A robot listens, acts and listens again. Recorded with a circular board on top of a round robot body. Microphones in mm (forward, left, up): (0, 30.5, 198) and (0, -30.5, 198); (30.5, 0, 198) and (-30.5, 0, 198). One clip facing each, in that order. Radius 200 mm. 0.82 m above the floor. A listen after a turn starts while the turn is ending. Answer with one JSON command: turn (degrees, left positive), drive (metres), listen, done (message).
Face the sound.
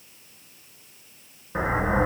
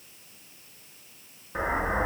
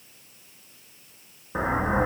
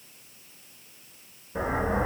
{"turn": 10}
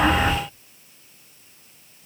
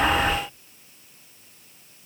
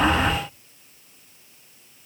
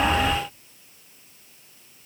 {"done": "Facing the explosion, over 4 m away."}